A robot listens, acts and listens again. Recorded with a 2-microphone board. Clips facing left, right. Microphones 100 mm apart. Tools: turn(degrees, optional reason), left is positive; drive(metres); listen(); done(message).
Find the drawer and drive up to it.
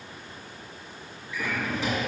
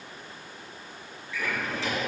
turn(degrees=15, reason="The drawer: about 15° left or 165° left.")
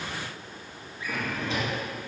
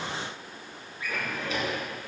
turn(degrees=150, reason="So it is at 150° left.")
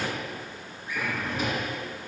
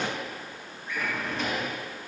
turn(degrees=10, reason="The drawer is now 10° left.")
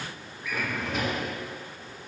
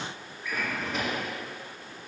drive(metres=1.0)
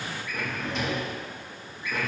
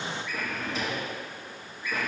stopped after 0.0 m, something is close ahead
done("Blocked. The drawer is further on, straight ahead.")